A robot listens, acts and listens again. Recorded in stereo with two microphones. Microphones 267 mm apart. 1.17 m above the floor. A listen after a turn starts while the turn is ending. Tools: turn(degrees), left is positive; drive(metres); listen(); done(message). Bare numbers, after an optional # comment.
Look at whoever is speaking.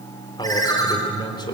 # The man speaking: about 15° left or 165° left.
turn(15)
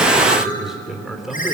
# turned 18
done("Found it: a man speaking, straight ahead.")